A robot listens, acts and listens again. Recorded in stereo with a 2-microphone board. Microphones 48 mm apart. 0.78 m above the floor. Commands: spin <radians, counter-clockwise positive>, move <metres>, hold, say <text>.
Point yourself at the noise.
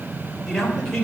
spin 0.52
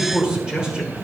spin -0.26
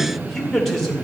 spin 0.17
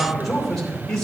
spin 0.17
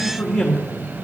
spin 0.17
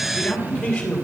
spin 0.17
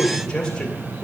say Facing the man speaking, 2 to 4 m away.